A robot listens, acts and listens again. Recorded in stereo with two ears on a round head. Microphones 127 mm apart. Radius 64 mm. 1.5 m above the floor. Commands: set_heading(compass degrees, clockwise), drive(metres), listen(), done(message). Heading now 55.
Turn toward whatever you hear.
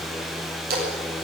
set_heading(125)
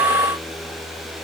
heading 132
listen()
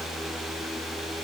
done("I heard a splash, but can't make it out now. It was about 5° left or 35° right.")